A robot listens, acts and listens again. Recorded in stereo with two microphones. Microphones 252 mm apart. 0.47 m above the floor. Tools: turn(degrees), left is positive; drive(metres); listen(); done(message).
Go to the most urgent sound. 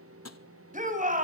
turn(degrees=-30)
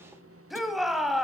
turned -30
drive(metres=1.0)
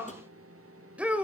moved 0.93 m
drive(metres=1.0)
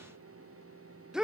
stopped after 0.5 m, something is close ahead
done("Arrived at the shout, straight ahead.")